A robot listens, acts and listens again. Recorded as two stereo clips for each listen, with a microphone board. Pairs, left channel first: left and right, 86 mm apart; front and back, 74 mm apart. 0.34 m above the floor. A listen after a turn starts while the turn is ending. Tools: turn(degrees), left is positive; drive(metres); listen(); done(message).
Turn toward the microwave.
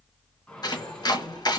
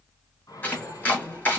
turn(degrees=15)
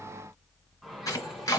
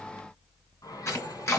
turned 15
done("Found it: a microwave, straight ahead.")